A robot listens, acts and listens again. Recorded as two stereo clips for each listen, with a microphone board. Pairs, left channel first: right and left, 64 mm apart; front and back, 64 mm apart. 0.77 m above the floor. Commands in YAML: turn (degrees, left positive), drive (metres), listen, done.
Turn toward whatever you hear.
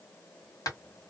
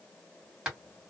turn: -105
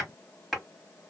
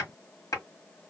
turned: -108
done: "Facing the hammering."